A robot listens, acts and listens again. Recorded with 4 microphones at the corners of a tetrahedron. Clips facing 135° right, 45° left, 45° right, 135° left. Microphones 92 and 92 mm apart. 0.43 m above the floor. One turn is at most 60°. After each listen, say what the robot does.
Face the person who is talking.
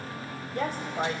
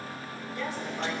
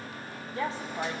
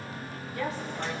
Turn 60° right.
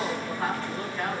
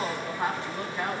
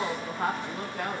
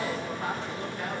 Turn 25° right.
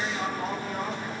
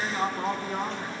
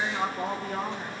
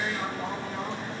Found it: a woman speaking, straight ahead, 2 to 4 m away.